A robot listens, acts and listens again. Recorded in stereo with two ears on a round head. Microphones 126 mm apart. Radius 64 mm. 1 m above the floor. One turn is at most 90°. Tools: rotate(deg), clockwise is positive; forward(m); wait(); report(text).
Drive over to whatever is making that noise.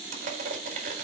rotate(55)
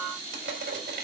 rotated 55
rotate(70)
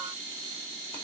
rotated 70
wait()
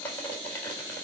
rotate(-15)
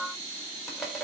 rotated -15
forward(1.0)
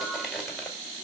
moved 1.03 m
forward(1.0)
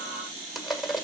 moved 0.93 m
forward(1.0)
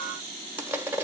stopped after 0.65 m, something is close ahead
rotate(15)
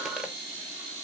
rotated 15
wait()
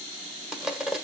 report("Arrived at the crushing, straight ahead.")